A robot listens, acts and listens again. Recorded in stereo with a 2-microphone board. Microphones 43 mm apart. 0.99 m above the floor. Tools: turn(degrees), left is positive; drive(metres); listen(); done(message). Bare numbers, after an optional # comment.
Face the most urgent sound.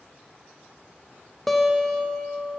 listen()
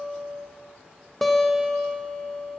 listen()
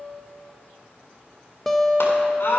# The scream: about 70° left or 110° left.
turn(70)
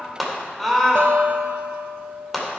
done("Facing the scream, 2 to 4 m away.")